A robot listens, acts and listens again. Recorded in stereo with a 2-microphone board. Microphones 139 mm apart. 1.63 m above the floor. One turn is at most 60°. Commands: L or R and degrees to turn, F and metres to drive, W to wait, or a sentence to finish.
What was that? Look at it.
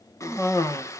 L20
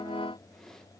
W
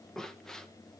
Facing the cough.